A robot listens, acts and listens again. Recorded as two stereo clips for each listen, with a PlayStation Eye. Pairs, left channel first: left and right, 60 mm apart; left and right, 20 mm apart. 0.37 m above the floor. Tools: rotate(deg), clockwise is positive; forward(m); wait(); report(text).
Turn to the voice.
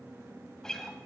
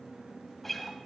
wait()
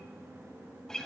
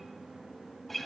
wait()
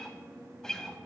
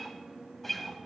report("I can't make out anyone speaking to turn to.")